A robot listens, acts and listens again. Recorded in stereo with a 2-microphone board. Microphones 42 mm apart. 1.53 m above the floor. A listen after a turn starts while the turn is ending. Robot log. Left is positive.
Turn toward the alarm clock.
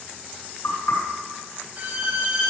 cmd idle
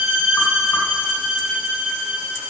cmd idle
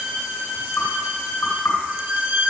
end: I can't make out an alarm clock, only a violin and knocking.